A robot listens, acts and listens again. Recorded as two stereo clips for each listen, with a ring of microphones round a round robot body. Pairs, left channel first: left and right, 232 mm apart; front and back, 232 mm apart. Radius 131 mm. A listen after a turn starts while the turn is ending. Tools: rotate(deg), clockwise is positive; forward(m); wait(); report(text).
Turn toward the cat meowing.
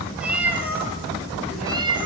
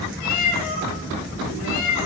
rotate(20)
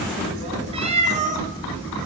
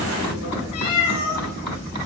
rotate(35)
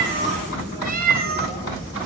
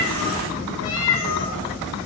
rotate(45)
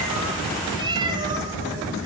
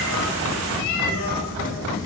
rotate(20)
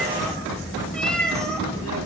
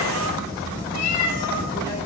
report("Facing the cat meowing.")